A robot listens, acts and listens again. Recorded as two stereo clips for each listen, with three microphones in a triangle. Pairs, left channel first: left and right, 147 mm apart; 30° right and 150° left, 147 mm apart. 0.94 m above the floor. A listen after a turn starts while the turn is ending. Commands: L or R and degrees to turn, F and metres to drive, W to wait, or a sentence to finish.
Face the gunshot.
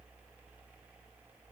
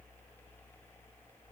W
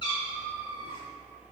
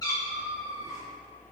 W
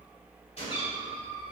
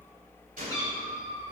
L135
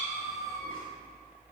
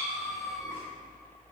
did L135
Facing where the gunshot came from. I can't hear it now.